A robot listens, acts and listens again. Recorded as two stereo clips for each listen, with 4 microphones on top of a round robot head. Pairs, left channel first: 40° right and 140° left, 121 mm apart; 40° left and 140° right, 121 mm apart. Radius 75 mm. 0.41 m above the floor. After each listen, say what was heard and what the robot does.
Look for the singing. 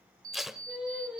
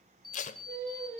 The singing: 140° right. Turn 140° right.
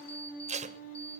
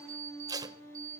The singing is now 30° right. Turn 30° right.
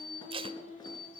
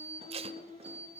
The singing is now 15° right. Turn 15° right.
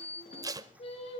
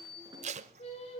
Facing the singing.